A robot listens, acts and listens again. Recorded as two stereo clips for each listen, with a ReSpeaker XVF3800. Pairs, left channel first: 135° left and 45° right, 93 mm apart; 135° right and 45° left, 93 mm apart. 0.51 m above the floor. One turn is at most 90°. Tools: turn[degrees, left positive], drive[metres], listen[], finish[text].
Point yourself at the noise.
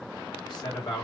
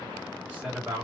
Thought: The man speaking: 115° left.
Action: turn[90]
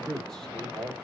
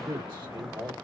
Thought: The man speaking is now 55° left.
Action: turn[55]
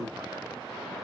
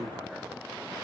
Action: listen[]
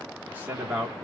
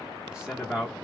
Thought: The man speaking is now 40° right.
Action: turn[-40]
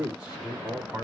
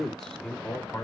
Thought: The man speaking is now 95° right.
Action: turn[-90]
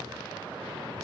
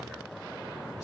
Action: listen[]
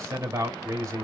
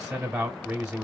Thought: The man speaking is now 30° right.
Action: turn[-30]
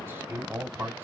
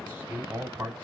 Thought: The man speaking is now 10° right.
Action: turn[-10]
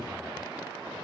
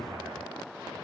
Action: listen[]
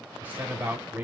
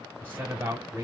Action: finish[Facing the man speaking, 1 to 2 m away.]